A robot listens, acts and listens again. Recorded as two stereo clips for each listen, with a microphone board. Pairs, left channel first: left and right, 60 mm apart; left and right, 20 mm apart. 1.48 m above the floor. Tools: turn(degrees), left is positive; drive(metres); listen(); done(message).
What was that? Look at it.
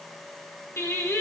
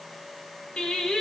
turn(degrees=60)
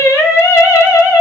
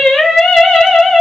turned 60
turn(degrees=55)
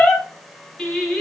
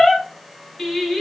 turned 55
turn(degrees=10)
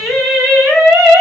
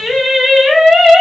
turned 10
done("Facing the singing, 2 to 4 m away.")